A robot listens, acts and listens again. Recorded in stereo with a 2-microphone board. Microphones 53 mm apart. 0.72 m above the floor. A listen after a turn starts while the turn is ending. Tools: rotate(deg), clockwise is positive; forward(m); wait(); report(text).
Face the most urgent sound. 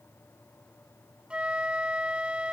wait()
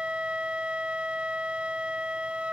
wait()
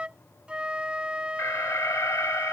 rotate(-75)
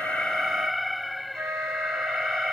report("Facing the alarm.")